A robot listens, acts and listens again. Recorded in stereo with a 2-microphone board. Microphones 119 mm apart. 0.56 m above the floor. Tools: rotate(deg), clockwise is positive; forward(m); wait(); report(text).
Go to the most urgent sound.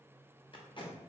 wait()
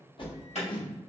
rotate(-65)
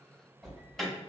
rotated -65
forward(1.0)
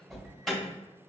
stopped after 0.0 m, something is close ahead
report("Blocked. The alarm is further on, straight ahead.")